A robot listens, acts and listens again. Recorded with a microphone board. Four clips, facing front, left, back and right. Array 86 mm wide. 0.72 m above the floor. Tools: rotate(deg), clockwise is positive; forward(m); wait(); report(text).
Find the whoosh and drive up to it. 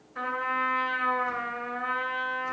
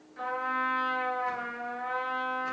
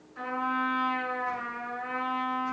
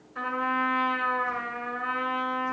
wait()
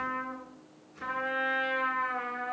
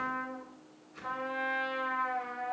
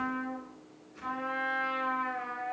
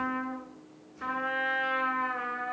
wait()
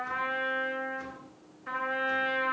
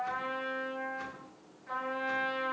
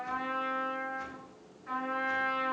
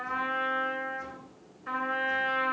report("I can't make out a whoosh, only a trumpet.")